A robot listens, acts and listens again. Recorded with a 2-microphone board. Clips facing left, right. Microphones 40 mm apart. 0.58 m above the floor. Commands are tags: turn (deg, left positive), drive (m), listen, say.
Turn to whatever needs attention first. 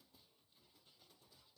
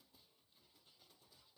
<listen/>
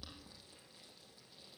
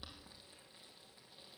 <listen/>
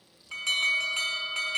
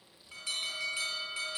<turn deg="75"/>
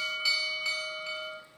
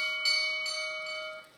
<say>Facing the alarm, over 4 m away.</say>